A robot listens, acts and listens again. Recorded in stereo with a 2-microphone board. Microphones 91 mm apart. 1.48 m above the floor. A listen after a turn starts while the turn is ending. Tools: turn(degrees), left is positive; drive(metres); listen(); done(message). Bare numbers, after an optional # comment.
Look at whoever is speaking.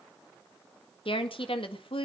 # The woman speaking: about 75° left or 105° left.
turn(75)
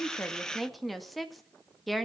done("Facing the woman speaking.")